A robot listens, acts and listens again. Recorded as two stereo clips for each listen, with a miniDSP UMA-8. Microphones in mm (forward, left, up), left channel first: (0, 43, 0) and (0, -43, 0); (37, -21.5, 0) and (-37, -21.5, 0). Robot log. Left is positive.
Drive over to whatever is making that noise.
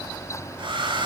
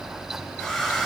note: The hair dryer: 90° right.
cmd yaw -90
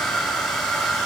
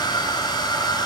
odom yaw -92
cmd fwd 1.0
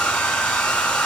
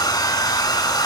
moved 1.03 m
note: The hair dryer is now 10° left.
cmd yaw +10
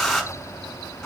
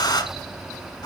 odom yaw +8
cmd fwd 1.0
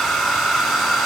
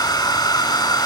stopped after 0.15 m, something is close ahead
end: Arrived at the hair dryer, straight ahead.